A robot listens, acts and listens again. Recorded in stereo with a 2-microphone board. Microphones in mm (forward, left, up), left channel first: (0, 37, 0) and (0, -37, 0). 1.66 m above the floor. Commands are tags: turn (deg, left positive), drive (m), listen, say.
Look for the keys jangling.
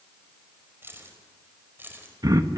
<turn deg="-25"/>
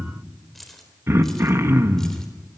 <say>Facing the keys jangling, 2 to 4 m away.</say>